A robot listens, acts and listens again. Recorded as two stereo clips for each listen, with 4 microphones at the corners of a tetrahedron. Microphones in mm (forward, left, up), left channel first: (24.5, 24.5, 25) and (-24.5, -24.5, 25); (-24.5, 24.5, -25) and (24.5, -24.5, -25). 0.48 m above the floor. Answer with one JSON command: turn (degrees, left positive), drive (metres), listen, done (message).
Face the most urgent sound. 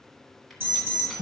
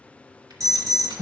{"turn": -80}
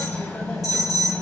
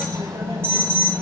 {"turn": 10}
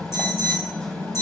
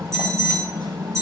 {"done": "Found it: an alarm, straight ahead."}